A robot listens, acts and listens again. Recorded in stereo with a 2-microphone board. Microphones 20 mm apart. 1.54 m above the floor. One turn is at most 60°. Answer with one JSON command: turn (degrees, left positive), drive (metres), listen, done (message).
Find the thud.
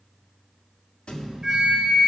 {"turn": 50}
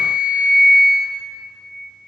{"listen": true}
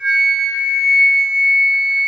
{"done": "I heard a thud, but can't make it out now. It was about straight ahead or 80° left."}